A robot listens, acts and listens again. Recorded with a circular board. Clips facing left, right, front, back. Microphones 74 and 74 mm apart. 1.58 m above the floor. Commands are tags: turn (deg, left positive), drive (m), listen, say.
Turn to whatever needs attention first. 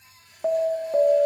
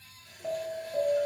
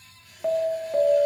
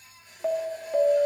<turn deg="95"/>
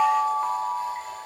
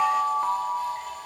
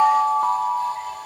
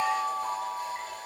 <turn deg="-10"/>
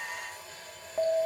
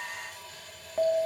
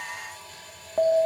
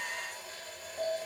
<say>Facing the alarm.</say>